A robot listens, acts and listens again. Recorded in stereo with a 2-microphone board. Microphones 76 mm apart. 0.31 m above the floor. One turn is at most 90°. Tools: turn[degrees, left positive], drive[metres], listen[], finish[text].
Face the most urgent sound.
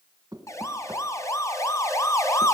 Thought: The siren: about 40° left or 140° left.
Action: turn[40]
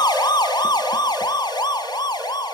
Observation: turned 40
Thought: So it is at 95° left.
Action: turn[90]
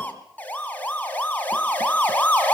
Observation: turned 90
Thought: The siren is now 20° left.
Action: turn[20]
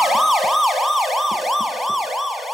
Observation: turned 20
Action: finish[Facing the siren.]